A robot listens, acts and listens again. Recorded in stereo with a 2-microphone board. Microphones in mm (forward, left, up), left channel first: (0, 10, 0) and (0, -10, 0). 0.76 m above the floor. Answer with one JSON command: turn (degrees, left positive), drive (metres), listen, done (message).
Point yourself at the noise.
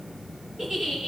{"turn": -25}
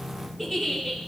{"done": "Found it: a giggle, straight ahead."}